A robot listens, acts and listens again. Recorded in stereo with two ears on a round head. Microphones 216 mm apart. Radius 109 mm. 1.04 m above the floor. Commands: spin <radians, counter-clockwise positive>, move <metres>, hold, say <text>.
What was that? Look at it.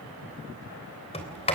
spin 0.44
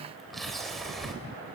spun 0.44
say Found it: a sliding door, straight ahead, 2 to 4 m away.